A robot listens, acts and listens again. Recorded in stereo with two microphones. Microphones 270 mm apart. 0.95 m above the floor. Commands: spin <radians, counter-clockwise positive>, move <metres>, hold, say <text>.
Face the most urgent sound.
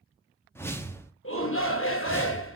spin 0.87
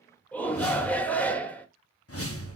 say Found it: a shout, straight ahead.